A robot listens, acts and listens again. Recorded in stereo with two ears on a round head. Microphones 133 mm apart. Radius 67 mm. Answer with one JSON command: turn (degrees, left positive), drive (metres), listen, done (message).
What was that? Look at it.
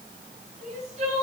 {"turn": -50}
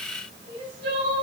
{"turn": -80}
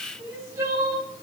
{"turn": -20}
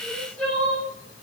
{"done": "Facing the crying, over 4 m away."}